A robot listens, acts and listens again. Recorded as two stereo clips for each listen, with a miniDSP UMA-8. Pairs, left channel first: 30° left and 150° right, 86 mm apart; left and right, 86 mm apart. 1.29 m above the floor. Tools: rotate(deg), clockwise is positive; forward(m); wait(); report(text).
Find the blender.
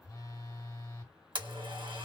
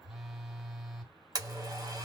rotate(135)
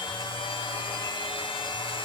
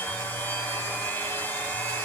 rotate(-25)
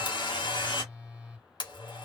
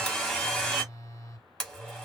report("Facing the blender, 1 to 2 m away.")